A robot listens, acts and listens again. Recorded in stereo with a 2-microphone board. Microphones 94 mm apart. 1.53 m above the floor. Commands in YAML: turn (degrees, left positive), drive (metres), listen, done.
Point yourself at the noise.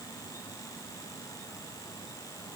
listen: true
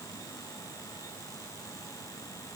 listen: true
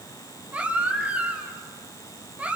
turn: -30
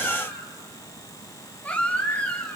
turn: 15
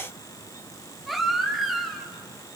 done: "Found it: a baby crying, straight ahead, 2 to 4 m away."